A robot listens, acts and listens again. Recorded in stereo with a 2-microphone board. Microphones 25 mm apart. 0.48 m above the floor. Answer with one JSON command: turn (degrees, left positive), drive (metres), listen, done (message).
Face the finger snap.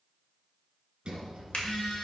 {"turn": 60}
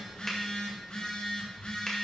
{"listen": true}
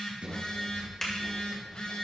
{"turn": 25}
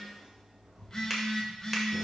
{"turn": -10}
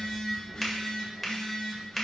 {"done": "Found it: a finger snap, straight ahead."}